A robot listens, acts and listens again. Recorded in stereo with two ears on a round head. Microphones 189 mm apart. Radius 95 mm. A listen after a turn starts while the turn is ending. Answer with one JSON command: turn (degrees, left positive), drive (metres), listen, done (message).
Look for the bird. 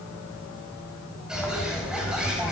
{"turn": -30}
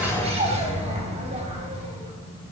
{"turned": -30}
{"turn": -145}
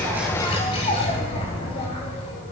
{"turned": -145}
{"turn": 30}
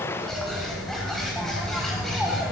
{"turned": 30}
{"done": "Found it: a bird, straight ahead."}